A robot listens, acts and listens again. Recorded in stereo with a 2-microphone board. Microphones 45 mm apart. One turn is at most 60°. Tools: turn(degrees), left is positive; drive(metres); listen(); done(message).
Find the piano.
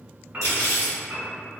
turn(degrees=-35)
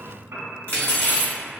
turn(degrees=-60)
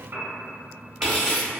turn(degrees=-60)
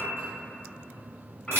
turn(degrees=15)
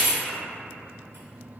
listen()
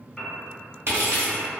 turn(degrees=10)
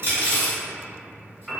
done("Facing the piano.")